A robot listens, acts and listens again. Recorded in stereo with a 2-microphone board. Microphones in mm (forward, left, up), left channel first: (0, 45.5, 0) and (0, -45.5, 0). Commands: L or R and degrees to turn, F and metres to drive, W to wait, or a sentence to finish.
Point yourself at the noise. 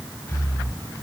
L25
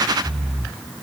Facing the breathing, 1 to 2 m away.